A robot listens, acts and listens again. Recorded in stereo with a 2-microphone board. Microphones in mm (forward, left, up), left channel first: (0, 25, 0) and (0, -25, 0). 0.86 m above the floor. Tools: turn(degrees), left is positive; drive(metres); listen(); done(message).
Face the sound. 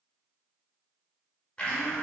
turn(degrees=20)
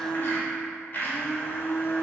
turn(degrees=140)
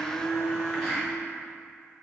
turn(degrees=10)
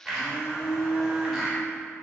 done("Facing the blender.")